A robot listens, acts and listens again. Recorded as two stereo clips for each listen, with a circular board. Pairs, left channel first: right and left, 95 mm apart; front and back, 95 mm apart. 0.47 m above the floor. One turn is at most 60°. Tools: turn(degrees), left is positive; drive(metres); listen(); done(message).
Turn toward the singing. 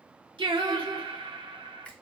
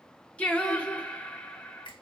turn(degrees=60)
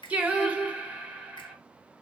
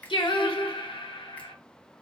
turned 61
turn(degrees=15)
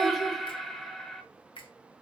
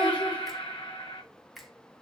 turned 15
done("Found it: singing, straight ahead.")